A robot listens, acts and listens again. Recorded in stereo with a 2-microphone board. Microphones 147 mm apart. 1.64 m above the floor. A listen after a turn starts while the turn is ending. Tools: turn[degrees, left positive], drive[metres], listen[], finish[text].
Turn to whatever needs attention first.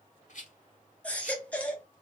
Action: turn[30]
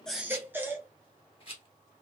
Thought: So it is at 15° right.
Action: turn[-15]
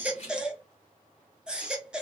Action: finish[Facing the baby crying, 1 to 2 m away.]